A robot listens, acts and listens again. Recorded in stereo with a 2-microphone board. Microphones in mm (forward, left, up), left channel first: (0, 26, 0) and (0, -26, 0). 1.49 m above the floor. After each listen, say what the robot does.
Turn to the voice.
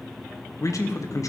Turn 90° left.
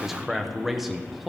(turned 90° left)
Found it: a man speaking, straight ahead.